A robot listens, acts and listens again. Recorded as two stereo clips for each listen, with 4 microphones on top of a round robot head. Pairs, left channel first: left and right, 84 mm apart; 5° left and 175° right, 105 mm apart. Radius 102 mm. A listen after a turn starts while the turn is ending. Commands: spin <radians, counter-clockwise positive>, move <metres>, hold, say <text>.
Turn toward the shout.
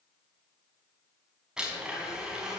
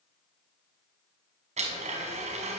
hold
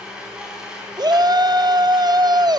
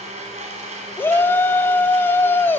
spin -1.13
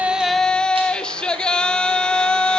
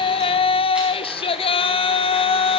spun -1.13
spin 0.17
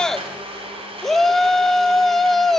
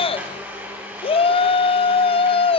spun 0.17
say Found it: a shout, straight ahead.